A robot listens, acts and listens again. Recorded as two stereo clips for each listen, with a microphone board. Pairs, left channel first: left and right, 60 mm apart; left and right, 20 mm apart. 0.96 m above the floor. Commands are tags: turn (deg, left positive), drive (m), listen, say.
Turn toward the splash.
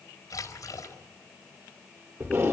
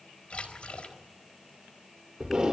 <turn deg="65"/>
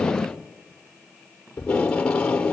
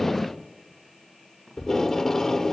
<listen/>
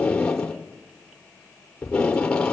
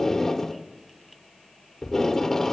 <say>I heard a splash, but can't make it out now. It was about straight ahead or 50° left.</say>